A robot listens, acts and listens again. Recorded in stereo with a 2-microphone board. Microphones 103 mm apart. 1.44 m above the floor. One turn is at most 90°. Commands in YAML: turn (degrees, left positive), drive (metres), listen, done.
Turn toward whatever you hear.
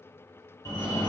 turn: 30
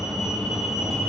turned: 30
done: "Facing the fire alarm, 1 to 2 m away."